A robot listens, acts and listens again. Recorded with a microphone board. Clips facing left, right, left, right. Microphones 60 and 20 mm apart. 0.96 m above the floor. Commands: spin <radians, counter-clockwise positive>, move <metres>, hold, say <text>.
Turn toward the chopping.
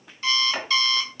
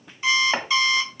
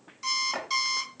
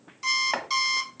spin -0.87
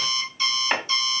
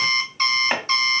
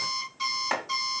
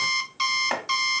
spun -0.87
spin -0.17
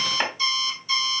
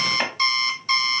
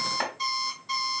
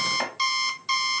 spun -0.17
say Found it: chopping, straight ahead.